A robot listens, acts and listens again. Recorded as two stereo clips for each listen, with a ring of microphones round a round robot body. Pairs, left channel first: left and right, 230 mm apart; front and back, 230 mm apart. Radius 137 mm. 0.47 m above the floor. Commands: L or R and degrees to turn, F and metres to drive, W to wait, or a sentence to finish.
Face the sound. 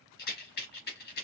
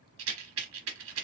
L145
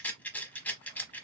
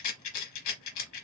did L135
Facing the rattle, 1 to 2 m away.